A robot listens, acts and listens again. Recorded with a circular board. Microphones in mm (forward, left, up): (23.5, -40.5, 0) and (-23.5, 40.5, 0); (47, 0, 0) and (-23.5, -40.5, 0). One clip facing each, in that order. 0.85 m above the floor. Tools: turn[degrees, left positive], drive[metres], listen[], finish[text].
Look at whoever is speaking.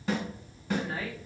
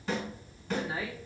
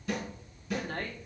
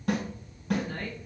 Thought: The woman speaking: 35° left.
Action: turn[35]
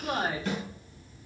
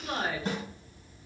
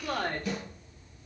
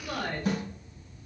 Action: finish[Facing the woman speaking.]